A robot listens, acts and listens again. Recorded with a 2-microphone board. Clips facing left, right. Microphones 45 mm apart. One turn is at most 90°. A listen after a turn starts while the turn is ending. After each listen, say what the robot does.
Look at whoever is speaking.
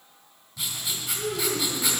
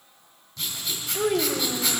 Turn 60° right.
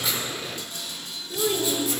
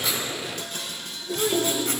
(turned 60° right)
Found it: a child speaking, straight ahead.